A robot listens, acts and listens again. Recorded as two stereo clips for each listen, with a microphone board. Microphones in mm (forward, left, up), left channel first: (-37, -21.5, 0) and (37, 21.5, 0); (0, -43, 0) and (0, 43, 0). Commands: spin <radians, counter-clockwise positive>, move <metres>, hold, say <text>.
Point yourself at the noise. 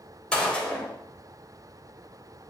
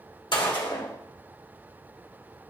spin -1.31
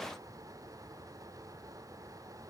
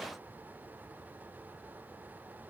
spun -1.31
say Facing where the gunshot came from. I can't hear it now.